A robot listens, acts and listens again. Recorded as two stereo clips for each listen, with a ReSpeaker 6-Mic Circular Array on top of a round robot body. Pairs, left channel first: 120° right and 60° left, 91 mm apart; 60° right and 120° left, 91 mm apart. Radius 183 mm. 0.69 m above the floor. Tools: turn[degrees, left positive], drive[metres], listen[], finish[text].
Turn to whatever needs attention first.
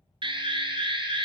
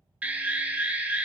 Thought: The alarm: 45° left.
Action: turn[45]
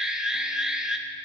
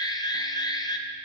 Thought: The alarm is now 20° right.
Action: turn[-20]
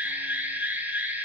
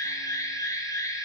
Thought: The alarm is now 10° right.
Action: turn[-10]
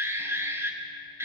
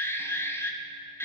Action: finish[Found it: an alarm, straight ahead.]